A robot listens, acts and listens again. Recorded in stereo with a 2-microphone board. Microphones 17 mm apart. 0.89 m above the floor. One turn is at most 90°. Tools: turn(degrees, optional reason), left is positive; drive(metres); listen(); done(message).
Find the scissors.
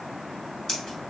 turn(degrees=30, reason="The scissors: about 30° left or 150° left.")
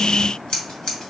turn(degrees=90, reason="So it is at 120° left.")
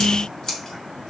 turn(degrees=40, reason="The scissors is now 40° left.")
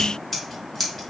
turn(degrees=10, reason="The scissors is now 10° left.")
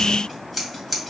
done("Facing the scissors.")